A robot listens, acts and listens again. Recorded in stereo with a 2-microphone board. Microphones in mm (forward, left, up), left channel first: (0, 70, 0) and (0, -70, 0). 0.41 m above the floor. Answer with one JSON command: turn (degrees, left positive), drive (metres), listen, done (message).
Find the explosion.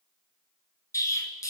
{"turn": 20}
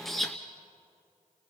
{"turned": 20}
{"done": "Facing the explosion."}